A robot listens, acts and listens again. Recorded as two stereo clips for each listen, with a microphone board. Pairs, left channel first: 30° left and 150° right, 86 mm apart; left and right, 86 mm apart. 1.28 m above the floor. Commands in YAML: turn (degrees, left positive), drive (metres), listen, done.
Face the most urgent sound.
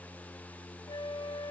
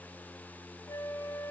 listen: true
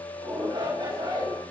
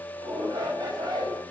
turn: -130
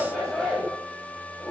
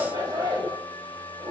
turn: -60
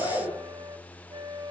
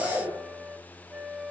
turn: 15
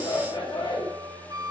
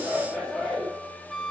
done: "Found it: a shout, straight ahead."